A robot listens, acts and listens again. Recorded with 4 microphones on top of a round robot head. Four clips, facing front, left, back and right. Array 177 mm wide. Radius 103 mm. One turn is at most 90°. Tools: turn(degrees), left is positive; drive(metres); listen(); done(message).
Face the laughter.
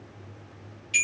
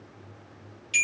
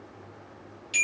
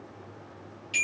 listen()
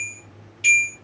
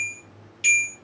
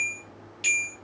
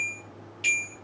listen()
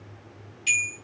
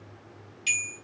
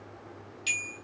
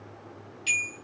done("I can't make out laughter, only a bell.")